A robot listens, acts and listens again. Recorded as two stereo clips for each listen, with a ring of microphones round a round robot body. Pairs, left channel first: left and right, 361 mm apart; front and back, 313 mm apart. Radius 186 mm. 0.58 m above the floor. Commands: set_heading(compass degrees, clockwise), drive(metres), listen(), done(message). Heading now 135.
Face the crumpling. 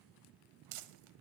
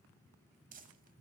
set_heading(245)
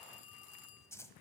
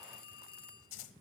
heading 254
done("Found it: crumpling, straight ahead, 1 to 2 m away.")